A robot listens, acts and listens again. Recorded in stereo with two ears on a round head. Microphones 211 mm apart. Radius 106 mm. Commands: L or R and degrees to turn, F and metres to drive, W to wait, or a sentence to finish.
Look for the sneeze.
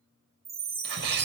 R55
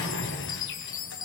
W
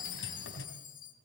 I heard a sneeze, but can't make it out now. It was about straight ahead or 70° right.